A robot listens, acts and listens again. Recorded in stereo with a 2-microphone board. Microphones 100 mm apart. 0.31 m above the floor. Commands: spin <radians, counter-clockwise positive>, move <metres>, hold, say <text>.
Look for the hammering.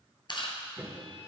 spin -0.44
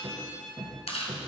spin -2.18
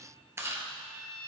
hold
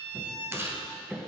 say Found it: hammering, straight ahead, 2 to 4 m away.